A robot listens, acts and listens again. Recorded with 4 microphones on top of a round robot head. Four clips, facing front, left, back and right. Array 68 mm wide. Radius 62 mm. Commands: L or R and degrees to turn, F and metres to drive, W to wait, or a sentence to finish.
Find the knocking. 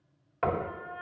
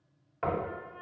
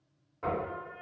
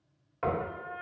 Facing the knocking.